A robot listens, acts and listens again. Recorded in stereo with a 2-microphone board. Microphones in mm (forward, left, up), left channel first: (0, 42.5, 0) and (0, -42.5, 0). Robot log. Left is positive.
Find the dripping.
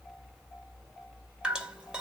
cmd yaw -30
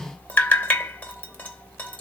note: So it is at 20° left.
cmd yaw +20
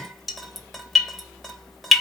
end: Found it: dripping, straight ahead.